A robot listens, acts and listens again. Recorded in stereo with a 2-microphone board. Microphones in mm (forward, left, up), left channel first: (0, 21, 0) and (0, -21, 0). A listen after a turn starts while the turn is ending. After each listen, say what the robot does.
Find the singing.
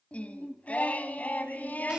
Turn 40° left.
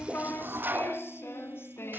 Turn 105° left.
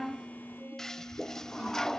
Keep listening.
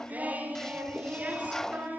Turn 40° right.
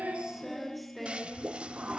Found it: singing, straight ahead, over 4 m away.